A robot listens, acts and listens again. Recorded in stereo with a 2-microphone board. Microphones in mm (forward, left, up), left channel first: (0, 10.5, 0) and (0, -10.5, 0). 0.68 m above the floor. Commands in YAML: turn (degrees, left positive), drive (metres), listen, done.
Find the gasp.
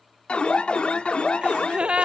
turn: -70
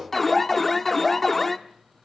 listen: true
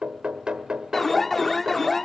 done: "I heard a gasp, but can't make it out now. It was about straight ahead or 40° right."